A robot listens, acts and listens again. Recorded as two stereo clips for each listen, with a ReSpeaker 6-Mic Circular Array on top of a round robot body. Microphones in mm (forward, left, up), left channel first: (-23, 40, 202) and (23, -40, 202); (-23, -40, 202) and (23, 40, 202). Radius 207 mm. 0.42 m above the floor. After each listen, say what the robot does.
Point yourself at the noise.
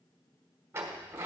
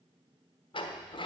Turn 120° right.
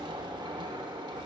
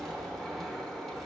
Turn 35° right.
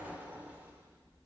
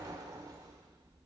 Turn 10° left.
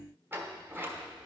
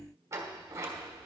Facing the sliding door.